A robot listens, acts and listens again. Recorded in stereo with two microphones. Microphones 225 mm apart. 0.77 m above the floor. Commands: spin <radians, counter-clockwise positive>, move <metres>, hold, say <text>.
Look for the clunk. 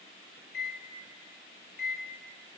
hold
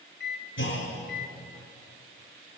spin 1.13
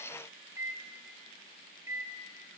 hold
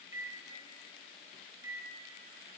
say I heard a clunk, but can't make it out now. It was about straight ahead or 50° left.